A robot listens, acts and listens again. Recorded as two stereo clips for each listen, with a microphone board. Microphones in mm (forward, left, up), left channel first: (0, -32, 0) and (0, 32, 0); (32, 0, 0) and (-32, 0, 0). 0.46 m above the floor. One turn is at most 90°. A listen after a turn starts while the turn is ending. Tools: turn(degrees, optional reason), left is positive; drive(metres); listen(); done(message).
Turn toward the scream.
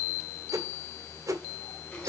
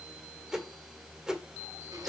listen()
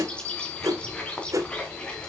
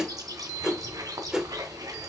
listen()
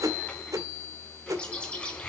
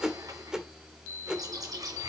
done("I can't make out a scream, only a whoosh and a bird.")